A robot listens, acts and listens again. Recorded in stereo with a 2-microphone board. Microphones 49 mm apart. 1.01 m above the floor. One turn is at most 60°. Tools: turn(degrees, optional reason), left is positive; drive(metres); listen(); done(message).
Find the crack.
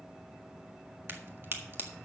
turn(degrees=-50, reason="The crack: about 50° right or 130° right.")
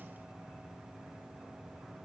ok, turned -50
listen()
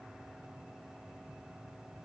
done("I heard a crack, but can't make it out now. It was about straight ahead or 80° right.")